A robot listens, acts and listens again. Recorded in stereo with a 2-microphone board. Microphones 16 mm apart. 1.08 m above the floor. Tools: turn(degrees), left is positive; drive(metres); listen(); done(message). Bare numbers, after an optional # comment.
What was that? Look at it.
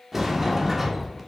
turn(-30)
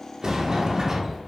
# So it is at 140° right.
turn(-140)
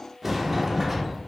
# The sliding door is now 25° right.
turn(-25)
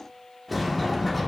done("Found it: a sliding door, straight ahead, 1 to 2 m away.")